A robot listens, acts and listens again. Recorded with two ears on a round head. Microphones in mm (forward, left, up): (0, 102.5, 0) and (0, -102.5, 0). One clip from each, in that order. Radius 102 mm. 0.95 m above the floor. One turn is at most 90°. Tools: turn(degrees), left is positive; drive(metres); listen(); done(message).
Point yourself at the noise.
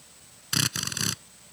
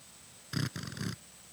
turn(degrees=90)
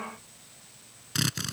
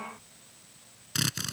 turn(degrees=-10)
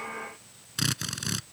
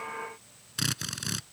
done("Facing the drill.")